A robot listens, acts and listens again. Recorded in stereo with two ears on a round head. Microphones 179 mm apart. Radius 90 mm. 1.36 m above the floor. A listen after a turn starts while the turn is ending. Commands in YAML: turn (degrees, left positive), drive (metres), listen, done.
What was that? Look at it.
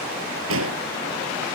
turn: -70
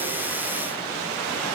listen: true
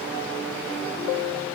done: "I heard an explosion, but can't make it out now. It was about straight ahead or 40° right."